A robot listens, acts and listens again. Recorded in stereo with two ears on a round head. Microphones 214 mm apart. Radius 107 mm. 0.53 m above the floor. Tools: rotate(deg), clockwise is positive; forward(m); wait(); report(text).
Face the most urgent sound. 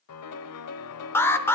rotate(-30)
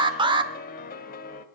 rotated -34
rotate(20)
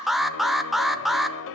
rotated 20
report("Found it: an alarm, straight ahead.")